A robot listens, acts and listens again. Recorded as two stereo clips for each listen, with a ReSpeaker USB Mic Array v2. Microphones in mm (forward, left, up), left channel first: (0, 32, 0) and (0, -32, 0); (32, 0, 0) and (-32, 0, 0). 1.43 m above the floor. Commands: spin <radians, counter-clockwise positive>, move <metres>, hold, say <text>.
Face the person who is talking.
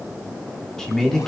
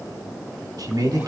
spin 3.05
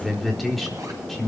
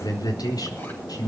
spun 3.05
say Found it: a man speaking, straight ahead, over 4 m away.